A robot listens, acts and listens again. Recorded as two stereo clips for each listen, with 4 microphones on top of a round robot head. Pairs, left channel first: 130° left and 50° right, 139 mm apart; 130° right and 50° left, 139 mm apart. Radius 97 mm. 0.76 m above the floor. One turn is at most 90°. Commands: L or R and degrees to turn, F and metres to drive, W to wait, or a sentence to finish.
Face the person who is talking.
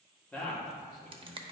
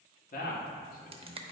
R90
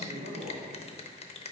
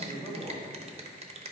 R35
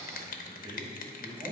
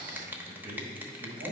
L10
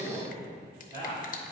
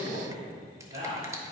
Found it: a man speaking, straight ahead, 2 to 4 m away.